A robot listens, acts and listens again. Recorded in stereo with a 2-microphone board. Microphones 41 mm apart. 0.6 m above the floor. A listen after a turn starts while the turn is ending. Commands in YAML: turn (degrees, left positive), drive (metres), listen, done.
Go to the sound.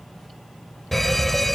turn: 30
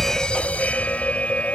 turn: 140
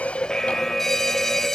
turn: 10
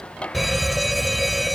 drive: 1.0
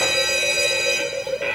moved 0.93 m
turn: -10
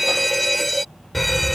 drive: 1.0
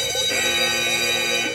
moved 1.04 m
drive: 1.0
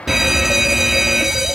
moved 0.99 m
turn: -20
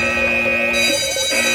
drive: 1.0
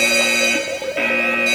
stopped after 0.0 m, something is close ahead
done: "Arrived at the fire alarm, straight ahead."